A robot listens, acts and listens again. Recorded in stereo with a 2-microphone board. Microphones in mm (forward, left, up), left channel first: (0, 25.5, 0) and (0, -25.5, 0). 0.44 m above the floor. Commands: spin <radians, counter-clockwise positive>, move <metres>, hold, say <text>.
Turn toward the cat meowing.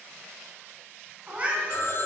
spin -0.44
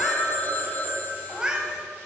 spin -0.35
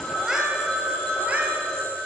spin -0.52
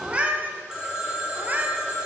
spin -0.52
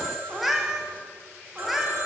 say Found it: a cat meowing, straight ahead, 1 to 2 m away.